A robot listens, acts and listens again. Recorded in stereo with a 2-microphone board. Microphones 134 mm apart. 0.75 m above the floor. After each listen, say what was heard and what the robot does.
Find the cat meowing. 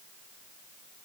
Keep listening.
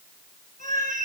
Turn 90° right.
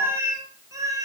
So it is at 25° right. Turn 25° right.
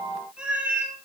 The cat meowing is now 10° right. Turn 10° right.
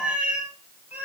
The cat meowing is now 15° right. Turn 15° right.
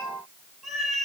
Facing the cat meowing.